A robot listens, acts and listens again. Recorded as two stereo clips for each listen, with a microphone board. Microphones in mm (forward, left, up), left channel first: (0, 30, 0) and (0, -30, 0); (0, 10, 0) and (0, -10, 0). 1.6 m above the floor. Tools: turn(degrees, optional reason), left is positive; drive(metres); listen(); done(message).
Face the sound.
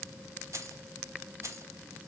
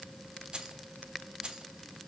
turn(degrees=-50, reason="The keys jangling: about 50° right or 130° right.")
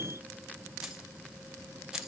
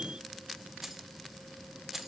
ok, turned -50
turn(degrees=-10, reason="So it is at 10° right.")
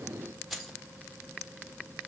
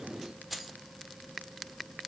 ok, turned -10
done("Facing the keys jangling, 1 to 2 m away.")